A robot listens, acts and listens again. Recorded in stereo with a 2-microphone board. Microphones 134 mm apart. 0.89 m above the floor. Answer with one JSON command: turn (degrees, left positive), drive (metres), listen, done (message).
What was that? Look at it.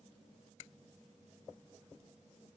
{"listen": true}
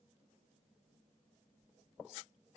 {"listen": true}
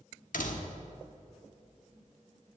{"turn": 90}
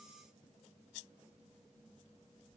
{"done": "Facing where the door slam came from. I can't hear it now."}